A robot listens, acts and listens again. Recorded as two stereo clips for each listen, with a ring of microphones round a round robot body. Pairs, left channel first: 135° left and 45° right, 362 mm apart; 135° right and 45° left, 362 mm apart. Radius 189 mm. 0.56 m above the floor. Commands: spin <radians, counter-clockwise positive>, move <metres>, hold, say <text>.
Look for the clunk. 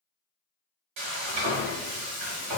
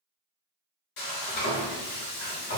hold
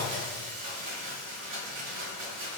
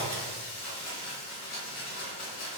hold
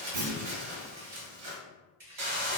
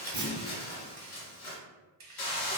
spin -0.61
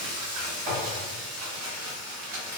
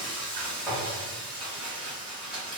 say I heard a clunk from this way, but can't make it out now.